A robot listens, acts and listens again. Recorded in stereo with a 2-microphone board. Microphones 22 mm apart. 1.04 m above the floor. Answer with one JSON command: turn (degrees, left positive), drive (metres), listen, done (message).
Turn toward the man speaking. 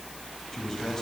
{"turn": 30}
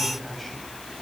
{"listen": true}
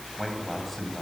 {"turn": 10}
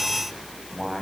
{"done": "Found it: a man speaking, straight ahead, over 4 m away."}